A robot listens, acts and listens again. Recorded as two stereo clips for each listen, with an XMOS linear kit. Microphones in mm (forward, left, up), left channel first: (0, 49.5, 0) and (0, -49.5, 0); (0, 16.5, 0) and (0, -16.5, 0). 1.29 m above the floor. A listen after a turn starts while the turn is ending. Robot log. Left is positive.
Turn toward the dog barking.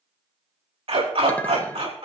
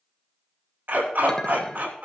note: The dog barking: about 75° right or 105° right.
cmd yaw -75
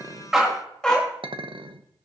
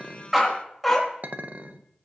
note: So it is at 10° left.
cmd yaw +10
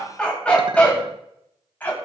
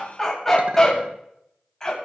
note: The dog barking is now 20° left.
cmd yaw +20
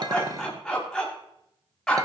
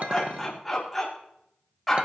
end: Found it: a dog barking, straight ahead, over 4 m away.